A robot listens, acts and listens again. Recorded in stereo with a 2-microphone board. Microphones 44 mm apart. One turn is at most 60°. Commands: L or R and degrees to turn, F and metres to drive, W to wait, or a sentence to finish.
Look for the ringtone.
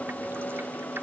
W
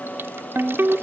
R60
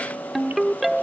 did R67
Found it: a ringtone, straight ahead.